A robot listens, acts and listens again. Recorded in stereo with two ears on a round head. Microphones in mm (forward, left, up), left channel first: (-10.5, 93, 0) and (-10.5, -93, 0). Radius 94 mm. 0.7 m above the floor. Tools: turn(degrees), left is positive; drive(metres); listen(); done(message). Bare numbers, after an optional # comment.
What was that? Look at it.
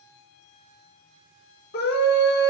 # The scream: about 45° left or 135° left.
turn(45)
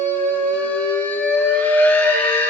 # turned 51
# So it is at 10° left.
turn(10)
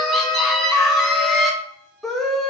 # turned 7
done("Found it: a scream, straight ahead, under 1 m away.")